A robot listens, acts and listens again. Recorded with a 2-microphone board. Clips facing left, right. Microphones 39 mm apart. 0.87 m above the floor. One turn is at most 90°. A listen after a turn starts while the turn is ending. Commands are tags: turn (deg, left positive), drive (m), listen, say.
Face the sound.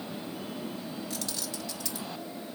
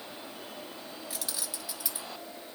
<turn deg="-30"/>
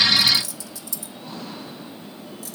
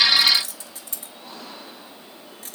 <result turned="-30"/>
<turn deg="-90"/>
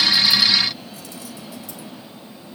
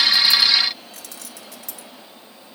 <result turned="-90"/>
<turn deg="-80"/>
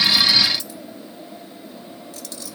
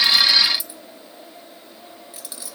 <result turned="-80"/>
<turn deg="-15"/>
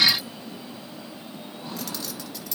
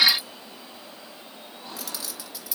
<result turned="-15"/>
<say>Facing the keys jangling, 1 to 2 m away.</say>